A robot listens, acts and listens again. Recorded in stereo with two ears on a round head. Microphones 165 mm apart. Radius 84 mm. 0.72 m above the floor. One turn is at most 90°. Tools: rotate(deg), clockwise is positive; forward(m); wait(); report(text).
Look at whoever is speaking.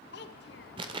rotate(-60)
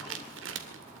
wait()
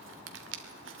wait()
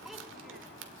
report("Found it: a child speaking, straight ahead.")